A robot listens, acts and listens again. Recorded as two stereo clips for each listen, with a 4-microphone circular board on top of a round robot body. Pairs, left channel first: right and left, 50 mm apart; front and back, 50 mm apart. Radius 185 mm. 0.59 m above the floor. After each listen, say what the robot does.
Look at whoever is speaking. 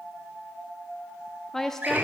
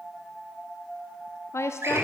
Turn 10° right.
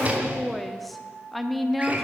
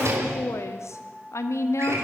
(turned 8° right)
Found it: a woman speaking, straight ahead, 1 to 2 m away.